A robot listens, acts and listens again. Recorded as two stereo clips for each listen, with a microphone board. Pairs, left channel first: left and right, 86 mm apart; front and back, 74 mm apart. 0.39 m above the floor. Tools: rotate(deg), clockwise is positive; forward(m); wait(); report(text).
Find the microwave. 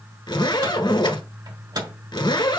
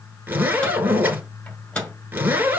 rotate(70)
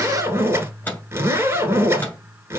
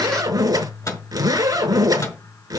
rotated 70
rotate(-25)
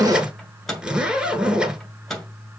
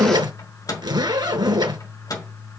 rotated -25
report("Facing the microwave.")